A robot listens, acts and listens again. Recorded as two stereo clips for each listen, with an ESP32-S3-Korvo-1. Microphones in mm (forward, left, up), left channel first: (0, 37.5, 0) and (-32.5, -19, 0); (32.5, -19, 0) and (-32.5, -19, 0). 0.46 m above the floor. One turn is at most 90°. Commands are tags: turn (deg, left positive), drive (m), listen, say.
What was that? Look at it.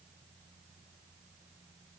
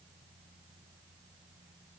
<listen/>
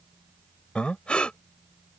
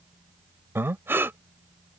<turn deg="90"/>
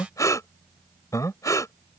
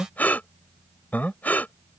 <turn deg="60"/>
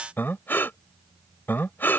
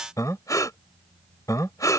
<turn deg="10"/>
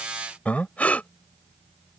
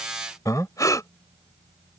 <say>Found it: breathing, straight ahead.</say>